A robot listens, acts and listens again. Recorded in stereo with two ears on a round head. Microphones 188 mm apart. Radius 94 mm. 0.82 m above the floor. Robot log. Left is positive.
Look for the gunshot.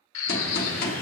note: The gunshot: about 45° left or 135° left.
cmd yaw +45
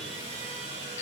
cmd idle
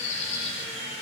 end: I heard a gunshot, but can't make it out now. It was about straight ahead or 90° left.